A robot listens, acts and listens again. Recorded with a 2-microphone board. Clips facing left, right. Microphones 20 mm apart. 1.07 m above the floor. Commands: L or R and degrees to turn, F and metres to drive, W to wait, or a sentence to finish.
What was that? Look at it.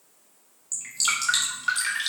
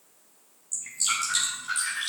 L55
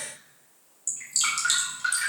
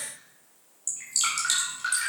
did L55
Facing the dripping, 2 to 4 m away.